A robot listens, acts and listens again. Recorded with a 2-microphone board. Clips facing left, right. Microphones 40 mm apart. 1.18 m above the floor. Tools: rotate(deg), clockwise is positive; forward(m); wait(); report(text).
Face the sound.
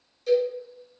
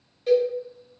rotate(30)
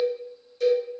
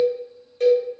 rotate(120)
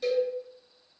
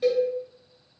rotate(25)
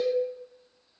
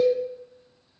rotate(15)
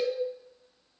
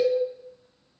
report("Found it: a cowbell, straight ahead.")